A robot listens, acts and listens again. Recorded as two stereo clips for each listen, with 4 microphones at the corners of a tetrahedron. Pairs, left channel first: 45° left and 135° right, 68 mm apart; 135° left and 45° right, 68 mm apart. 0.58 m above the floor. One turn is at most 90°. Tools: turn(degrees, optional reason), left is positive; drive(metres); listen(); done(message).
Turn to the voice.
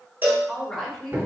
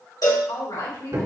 turn(degrees=90, reason="The woman speaking: 135° left.")
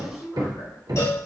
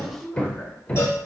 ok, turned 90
turn(degrees=65, reason="The woman speaking is now 65° left.")
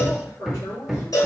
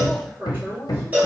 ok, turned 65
turn(degrees=25, reason="The woman speaking is now 25° left.")
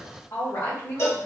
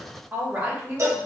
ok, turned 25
turn(degrees=20, reason="The woman speaking is now 20° left.")
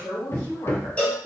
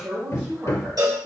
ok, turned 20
done("Facing the woman speaking.")